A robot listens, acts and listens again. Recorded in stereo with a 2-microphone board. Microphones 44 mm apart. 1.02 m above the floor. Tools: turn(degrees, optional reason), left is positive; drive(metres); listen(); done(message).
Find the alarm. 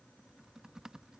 listen()
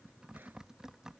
listen()
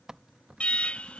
turn(degrees=30, reason="The alarm: about 30° left or 150° left.")
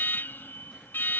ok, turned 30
turn(degrees=115, reason="So it is at 115° left.")
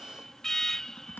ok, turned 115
turn(degrees=10, reason="The alarm is now 10° left.")
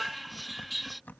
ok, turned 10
done("Facing the alarm.")